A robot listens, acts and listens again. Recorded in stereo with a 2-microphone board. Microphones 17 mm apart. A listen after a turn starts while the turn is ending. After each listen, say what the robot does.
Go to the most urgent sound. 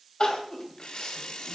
Turn 65° left.
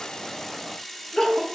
Turn 50° left.
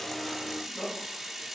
Turn 20° left.
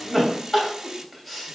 Drive 1.0 m forward.
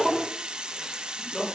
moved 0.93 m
Drive 1.0 m forward.
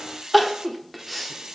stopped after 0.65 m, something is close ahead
Arrived at the crying, straight ahead.